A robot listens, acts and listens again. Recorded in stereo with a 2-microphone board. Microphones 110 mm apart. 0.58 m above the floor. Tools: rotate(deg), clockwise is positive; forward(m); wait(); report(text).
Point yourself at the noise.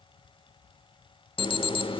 rotate(-55)
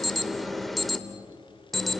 report("Found it: an alarm, straight ahead.")